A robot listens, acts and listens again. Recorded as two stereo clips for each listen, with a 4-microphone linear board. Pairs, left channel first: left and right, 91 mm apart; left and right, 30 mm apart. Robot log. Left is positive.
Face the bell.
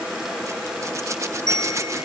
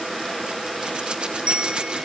note: The bell: about 40° right or 140° right.
cmd yaw -40
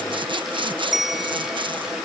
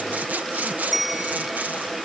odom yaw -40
end: Found it: a bell, straight ahead.